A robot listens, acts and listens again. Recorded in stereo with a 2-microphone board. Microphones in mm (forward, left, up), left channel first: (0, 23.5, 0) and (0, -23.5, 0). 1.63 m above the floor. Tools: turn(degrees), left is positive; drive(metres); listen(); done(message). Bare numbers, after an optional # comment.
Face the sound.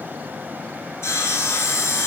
# The sawing: about 70° left or 110° left.
turn(70)
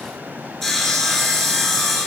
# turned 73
done("Facing the sawing.")